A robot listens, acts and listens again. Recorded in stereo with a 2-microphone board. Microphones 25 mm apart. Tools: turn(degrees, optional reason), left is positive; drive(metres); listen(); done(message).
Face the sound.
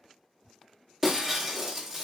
turn(degrees=-30)
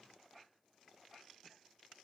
listen()
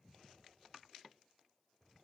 done("I heard breaking glass, but can't make it out now. It was about 15° left or 135° right.")